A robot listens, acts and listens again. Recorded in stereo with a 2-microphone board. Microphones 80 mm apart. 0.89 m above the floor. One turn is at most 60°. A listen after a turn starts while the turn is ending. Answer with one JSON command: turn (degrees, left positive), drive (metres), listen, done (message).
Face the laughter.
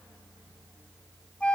{"listen": true}
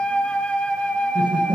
{"turn": -60}
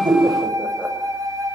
{"turn": -30}
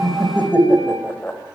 {"turn": 25}
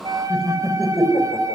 {"done": "Found it: laughter, straight ahead, over 4 m away."}